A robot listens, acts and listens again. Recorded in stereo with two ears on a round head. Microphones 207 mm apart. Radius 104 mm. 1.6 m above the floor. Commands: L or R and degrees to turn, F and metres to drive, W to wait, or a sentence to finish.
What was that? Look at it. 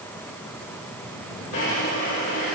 L65
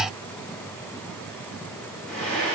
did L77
Found it: a drawer, straight ahead, 2 to 4 m away.